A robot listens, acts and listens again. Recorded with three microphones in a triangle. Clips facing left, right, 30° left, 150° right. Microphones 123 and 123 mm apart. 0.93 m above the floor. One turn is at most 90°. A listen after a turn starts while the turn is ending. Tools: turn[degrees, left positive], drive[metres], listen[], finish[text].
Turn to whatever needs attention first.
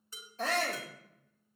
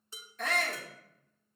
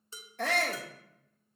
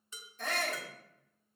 Thought: The shout: 35° left.
Action: turn[35]
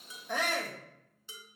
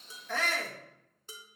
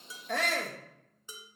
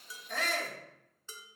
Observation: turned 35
Thought: The shout is now 15° left.
Action: turn[15]
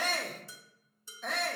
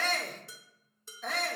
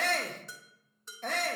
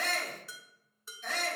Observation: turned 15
Action: finish[Facing the shout.]